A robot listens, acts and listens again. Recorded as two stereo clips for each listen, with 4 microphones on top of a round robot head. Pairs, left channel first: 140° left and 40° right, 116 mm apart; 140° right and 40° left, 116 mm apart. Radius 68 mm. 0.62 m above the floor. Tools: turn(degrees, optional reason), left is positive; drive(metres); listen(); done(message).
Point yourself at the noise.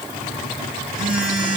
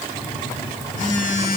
turn(degrees=-120, reason="The phone buzzing: 120° right.")
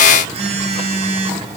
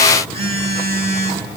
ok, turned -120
done("Found it: a phone buzzing, straight ahead, over 4 m away.")